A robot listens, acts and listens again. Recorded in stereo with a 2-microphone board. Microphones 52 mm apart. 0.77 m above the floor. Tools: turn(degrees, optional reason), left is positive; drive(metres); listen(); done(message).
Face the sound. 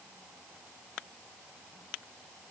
listen()
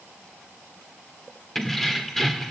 turn(degrees=30)
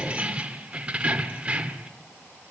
turn(degrees=-25, reason="So it is at 25° right.")
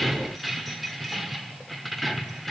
done("Facing the keys jangling, 1 to 2 m away.")